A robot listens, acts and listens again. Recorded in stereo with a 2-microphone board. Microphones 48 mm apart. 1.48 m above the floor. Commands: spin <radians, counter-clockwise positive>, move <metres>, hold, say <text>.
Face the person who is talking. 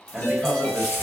spin 0.52
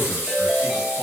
hold
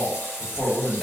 spin 2.62
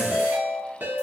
hold
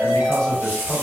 spin 0.26
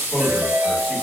say Facing the man speaking, 1 to 2 m away.